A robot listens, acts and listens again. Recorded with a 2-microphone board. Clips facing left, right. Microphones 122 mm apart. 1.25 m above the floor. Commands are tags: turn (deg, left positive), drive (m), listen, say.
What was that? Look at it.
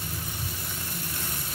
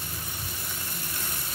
<listen/>
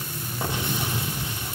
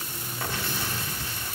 <turn deg="20"/>
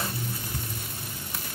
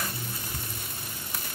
<listen/>
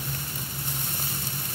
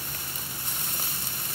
<say>I heard an explosion, but can't make it out now. It was about straight ahead or 140° left.</say>